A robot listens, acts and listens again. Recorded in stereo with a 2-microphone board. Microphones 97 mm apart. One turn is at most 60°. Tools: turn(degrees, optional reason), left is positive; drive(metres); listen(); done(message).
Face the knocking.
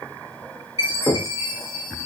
turn(degrees=30)
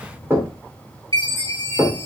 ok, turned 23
turn(degrees=-25, reason="So it is at 25° right.")
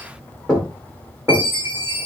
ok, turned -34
turn(degrees=10, reason="The knocking is now 10° left.")
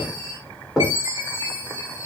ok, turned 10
done("Facing the knocking.")